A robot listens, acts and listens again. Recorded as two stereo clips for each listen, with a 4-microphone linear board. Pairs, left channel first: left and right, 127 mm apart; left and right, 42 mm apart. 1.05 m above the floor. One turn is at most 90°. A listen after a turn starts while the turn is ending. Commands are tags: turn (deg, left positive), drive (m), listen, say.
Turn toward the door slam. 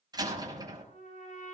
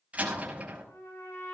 <turn deg="-30"/>
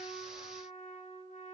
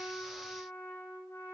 <listen/>
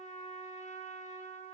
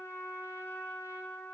<say>I heard a door slam, but can't make it out now. It was about straight ahead or 120° right.</say>